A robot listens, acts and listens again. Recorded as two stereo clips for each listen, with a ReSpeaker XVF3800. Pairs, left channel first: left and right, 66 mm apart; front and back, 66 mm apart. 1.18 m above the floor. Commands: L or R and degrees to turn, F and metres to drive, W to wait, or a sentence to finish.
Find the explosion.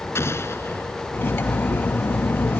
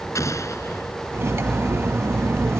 L40
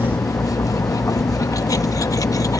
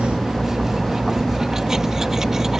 I heard an explosion from this way, but can't make it out now.